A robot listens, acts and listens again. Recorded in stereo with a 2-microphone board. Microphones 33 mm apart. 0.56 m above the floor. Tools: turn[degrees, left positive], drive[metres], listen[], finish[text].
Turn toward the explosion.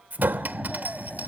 Action: turn[30]
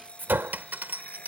Action: listen[]
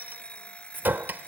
Action: finish[I heard an explosion, but can't make it out now. It was about 30° right or 150° left.]